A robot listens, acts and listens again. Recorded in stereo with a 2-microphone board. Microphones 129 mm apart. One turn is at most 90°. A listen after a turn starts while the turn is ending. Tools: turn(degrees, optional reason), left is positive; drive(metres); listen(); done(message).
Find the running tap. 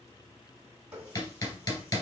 turn(degrees=-15, reason="The running tap: about 15° right or 165° right.")
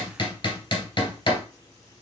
listen()
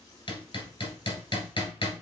listen()
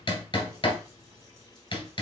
done("I heard a running tap, but can't make it out now. It was about straight ahead or 150° right.")